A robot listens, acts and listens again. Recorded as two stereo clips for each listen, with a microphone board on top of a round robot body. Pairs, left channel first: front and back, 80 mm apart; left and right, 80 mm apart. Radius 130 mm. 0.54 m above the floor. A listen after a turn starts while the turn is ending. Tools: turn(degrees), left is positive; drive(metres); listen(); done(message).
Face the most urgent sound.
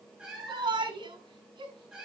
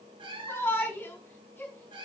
turn(degrees=160)
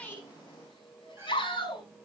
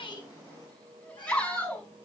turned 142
turn(degrees=20)
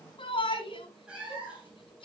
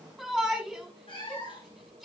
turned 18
done("Facing the shout, over 4 m away.")